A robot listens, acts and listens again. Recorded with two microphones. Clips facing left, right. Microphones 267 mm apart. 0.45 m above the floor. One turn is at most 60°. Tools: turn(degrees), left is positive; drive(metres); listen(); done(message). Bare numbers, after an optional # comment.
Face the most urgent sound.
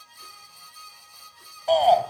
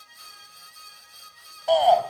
turn(30)
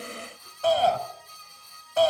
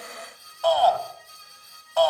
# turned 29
# So it is at 150° left.
turn(60)
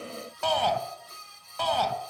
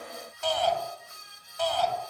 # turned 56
# The shout is now 95° left.
turn(60)
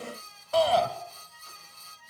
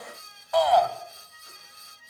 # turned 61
# The shout is now 35° left.
turn(35)
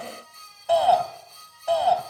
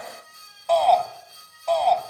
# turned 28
# The shout is now 10° left.
turn(10)
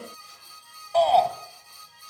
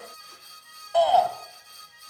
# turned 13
done("Facing the shout.")